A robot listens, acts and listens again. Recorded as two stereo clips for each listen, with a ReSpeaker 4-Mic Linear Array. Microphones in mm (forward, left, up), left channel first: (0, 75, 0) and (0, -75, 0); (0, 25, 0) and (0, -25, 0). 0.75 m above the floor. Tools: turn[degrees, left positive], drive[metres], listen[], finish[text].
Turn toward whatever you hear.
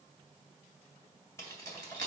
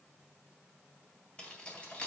Thought: The keys jangling: about 25° left or 155° left.
Action: turn[25]
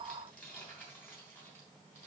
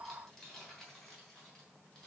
Thought: The keys jangling: about 15° left or 165° left.
Action: turn[15]
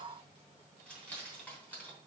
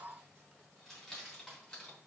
Action: turn[30]
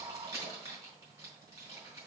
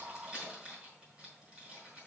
Thought: So it is at 20° right.
Action: turn[-20]
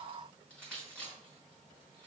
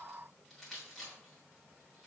Action: finish[Found it: keys jangling, straight ahead.]